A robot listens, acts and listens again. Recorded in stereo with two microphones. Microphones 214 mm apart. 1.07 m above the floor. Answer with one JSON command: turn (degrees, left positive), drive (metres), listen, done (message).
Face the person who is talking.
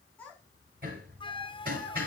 {"turn": 30}
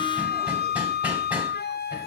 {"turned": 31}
{"listen": true}
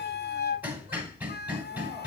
{"listen": true}
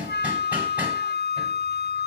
{"done": "I heard a child speaking, but can't make it out now. It was about 25° right or 145° left."}